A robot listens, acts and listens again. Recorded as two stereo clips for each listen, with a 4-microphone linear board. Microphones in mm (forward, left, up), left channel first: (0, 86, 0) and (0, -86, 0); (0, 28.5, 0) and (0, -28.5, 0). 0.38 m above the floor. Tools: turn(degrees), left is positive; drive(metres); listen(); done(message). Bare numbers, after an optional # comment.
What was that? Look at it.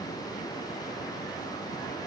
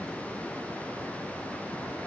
listen()
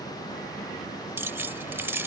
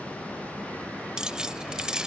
turn(-30)
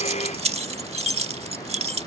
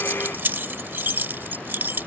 # So it is at 135° right.
turn(-135)
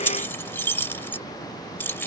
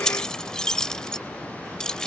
# The keys jangling is now 15° left.
turn(15)
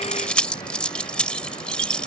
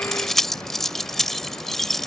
done("Facing the keys jangling.")